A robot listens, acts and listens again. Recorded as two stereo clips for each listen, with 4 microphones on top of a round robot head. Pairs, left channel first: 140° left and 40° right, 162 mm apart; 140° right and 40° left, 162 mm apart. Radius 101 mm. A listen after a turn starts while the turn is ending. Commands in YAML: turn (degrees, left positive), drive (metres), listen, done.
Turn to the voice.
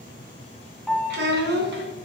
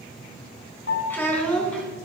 turn: -55
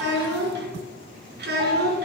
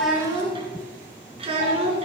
turn: -15
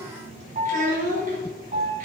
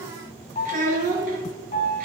done: "Found it: a child speaking, straight ahead, over 4 m away."